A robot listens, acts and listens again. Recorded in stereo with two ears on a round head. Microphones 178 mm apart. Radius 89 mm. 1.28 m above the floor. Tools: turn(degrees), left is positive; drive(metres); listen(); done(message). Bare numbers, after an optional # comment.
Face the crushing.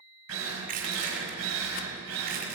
# The crushing: about 50° right or 130° right.
turn(-50)
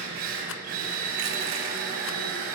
listen()
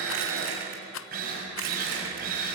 listen()
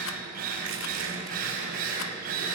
done("I heard crushing, but can't make it out now. It was about straight ahead or 80° right.")